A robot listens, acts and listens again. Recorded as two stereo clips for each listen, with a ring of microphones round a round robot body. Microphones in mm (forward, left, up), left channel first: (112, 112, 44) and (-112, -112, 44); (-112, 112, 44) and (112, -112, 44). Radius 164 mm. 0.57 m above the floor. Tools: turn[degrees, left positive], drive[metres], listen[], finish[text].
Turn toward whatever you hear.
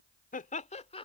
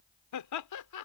Thought: The laughter: 115° left.
Action: turn[115]
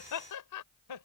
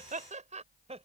Thought: The laughter is now 25° left.
Action: turn[25]
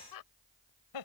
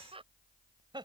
Thought: The laughter is now 30° left.
Action: turn[30]
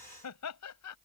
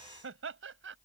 Thought: The laughter is now 10° left.
Action: turn[10]
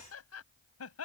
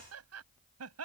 Action: finish[Found it: laughter, straight ahead.]